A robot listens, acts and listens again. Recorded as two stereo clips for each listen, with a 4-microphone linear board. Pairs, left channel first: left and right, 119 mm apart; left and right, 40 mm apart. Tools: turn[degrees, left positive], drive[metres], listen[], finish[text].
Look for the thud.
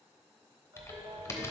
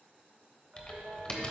Action: listen[]
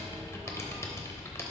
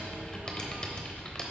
Action: listen[]
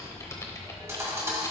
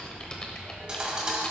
Thought: The thud: about 25° right or 155° right.
Action: turn[-25]
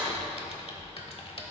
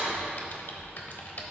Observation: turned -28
Thought: So it is at 130° right.
Action: turn[-130]
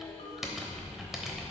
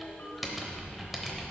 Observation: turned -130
Action: finish[I heard a thud from this way, but can't make it out now.]